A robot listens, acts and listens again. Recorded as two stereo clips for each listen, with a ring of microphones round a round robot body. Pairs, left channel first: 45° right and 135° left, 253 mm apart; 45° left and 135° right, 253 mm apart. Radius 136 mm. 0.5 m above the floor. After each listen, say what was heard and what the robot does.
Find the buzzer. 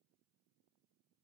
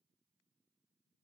Keep listening.
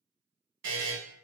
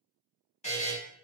The buzzer: 105° left. Turn 105° left.
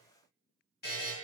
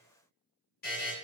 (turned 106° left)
Found it: a buzzer, straight ahead, 1 to 2 m away.